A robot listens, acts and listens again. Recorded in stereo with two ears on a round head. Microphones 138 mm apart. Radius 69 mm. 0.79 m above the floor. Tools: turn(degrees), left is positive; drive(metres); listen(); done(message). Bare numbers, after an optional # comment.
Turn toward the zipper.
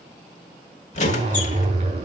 # The zipper: about 40° right or 140° right.
turn(-40)
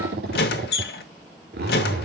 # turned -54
# So it is at 85° right.
turn(-85)
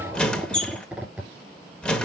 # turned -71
# The zipper is now 10° right.
turn(-10)
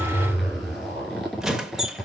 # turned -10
done("Facing the zipper.")